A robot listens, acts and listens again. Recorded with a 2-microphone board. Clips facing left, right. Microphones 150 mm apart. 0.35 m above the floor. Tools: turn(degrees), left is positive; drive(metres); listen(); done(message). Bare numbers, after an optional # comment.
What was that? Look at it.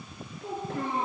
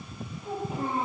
# The child speaking: about 70° left or 110° left.
turn(70)
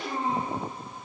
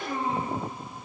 # So it is at 30° left.
turn(30)
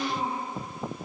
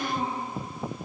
done("Facing the child speaking.")